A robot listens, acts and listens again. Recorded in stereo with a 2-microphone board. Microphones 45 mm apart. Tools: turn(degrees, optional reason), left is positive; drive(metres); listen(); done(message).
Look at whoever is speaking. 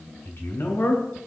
turn(degrees=60, reason="The man speaking: about 60° left or 120° left.")
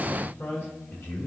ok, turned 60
turn(degrees=55, reason="So it is at 55° left.")
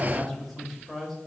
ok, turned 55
done("Facing the man speaking.")